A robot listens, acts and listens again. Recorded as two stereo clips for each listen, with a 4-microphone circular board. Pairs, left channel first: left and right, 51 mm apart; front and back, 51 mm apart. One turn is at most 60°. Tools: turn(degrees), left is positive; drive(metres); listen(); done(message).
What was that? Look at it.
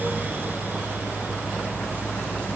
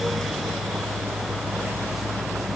listen()
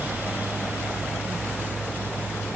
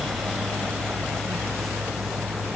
listen()
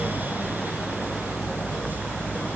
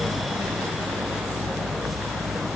done("I can't make out anything.")